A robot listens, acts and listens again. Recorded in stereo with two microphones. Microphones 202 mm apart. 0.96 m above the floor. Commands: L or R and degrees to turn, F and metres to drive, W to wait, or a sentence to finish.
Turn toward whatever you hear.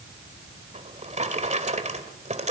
R35
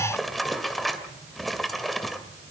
Found it: a drawer, straight ahead.